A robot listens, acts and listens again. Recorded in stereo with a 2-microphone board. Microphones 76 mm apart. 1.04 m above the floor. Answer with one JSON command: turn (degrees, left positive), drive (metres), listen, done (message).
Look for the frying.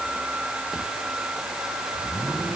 {"listen": true}
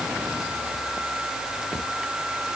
{"listen": true}
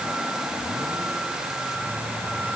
{"done": "I can't make out frying."}